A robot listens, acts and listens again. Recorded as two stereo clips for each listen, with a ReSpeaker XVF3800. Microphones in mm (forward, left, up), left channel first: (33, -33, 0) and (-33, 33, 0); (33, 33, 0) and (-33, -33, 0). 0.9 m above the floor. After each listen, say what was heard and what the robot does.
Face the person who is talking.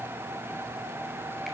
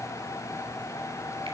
Keep listening.
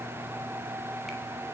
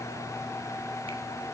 Keep listening.
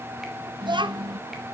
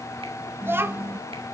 The child speaking: 160° left. Turn 160° left.
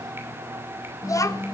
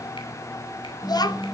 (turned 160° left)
Facing the child speaking, under 1 m away.